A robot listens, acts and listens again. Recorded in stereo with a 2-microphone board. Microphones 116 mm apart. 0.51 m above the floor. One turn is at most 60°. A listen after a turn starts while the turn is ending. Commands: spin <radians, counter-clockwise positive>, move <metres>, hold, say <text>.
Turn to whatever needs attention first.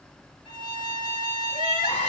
spin 1.05
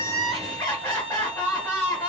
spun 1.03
spin 0.52
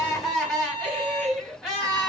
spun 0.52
say Facing the crying.